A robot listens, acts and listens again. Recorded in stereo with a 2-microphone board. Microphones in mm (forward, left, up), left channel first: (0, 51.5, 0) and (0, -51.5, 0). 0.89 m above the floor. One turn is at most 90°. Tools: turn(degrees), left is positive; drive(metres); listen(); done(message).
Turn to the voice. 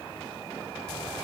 listen()
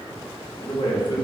turn(degrees=55)
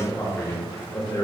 turn(degrees=40)
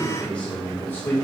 turn(degrees=20)
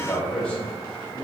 turn(degrees=20)
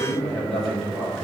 done("Found it: a man speaking, straight ahead, 2 to 4 m away.")